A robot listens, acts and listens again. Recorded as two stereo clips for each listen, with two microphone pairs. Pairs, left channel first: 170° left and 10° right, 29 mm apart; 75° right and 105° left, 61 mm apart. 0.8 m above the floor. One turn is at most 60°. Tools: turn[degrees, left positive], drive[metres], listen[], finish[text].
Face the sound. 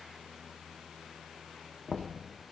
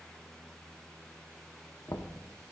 Thought: The knocking: 100° right.
Action: turn[-60]
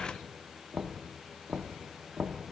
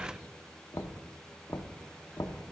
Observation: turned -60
Thought: The knocking is now 60° right.
Action: turn[-60]
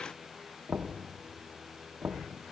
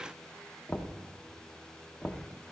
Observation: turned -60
Action: finish[Facing the knocking.]